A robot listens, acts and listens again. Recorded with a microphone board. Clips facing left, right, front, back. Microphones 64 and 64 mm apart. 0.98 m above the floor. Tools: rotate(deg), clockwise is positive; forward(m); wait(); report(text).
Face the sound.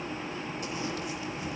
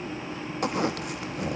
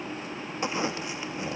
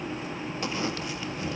rotate(65)
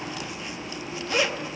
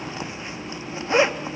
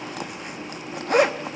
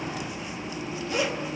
rotate(30)
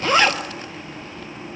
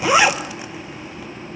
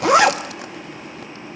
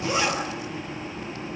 rotate(10)
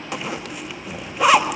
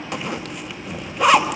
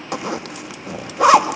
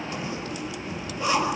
report("Found it: a zipper, straight ahead.")